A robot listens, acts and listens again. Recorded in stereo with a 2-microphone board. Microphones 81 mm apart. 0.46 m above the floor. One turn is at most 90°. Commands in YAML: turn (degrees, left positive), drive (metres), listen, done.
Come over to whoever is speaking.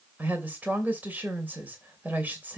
turn: -25
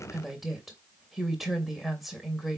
drive: 1.0
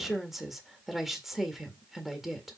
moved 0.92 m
drive: 1.0
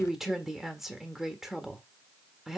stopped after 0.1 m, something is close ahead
turn: -10
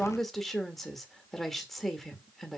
done: "Arrived at the woman speaking, straight ahead."